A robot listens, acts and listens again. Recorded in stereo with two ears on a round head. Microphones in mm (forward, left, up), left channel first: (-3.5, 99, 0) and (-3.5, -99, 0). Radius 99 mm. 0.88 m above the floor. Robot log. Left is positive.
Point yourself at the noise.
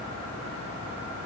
cmd idle
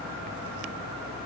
cmd idle
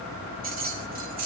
note: The keys jangling: about 40° right or 140° right.
cmd yaw -40
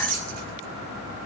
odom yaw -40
note: So it is at 100° right.
cmd yaw -100
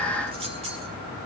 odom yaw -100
note: The keys jangling is now 25° right.
cmd yaw -25
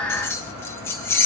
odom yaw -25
note: The keys jangling is now 10° left.
cmd yaw +10
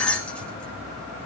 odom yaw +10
end: Facing the keys jangling.